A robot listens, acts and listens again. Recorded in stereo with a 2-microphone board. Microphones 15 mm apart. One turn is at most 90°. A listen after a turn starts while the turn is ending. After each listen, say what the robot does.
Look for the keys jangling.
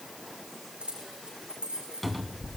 Turn 90° right.
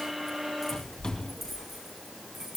Turn 20° right.
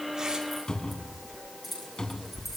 Found it: keys jangling, straight ahead, over 4 m away.